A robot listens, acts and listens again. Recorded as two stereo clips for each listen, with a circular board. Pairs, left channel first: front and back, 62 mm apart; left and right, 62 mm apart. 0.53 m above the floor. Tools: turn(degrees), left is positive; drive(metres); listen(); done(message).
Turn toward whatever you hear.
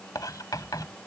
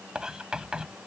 turn(degrees=-15)
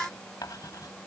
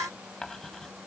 done("Found it: writing, straight ahead.")